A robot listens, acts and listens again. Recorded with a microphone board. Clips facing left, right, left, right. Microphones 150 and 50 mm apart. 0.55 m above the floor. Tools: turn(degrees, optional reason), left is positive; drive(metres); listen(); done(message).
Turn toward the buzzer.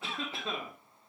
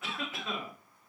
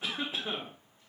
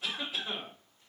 listen()
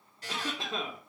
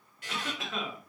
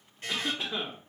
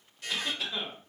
turn(degrees=35, reason="The buzzer: about 35° left or 145° left.")
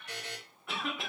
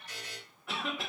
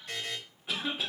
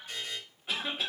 turn(degrees=105, reason="So it is at 105° left.")
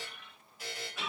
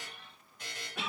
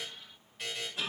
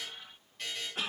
done("Facing the buzzer, 1 to 2 m away.")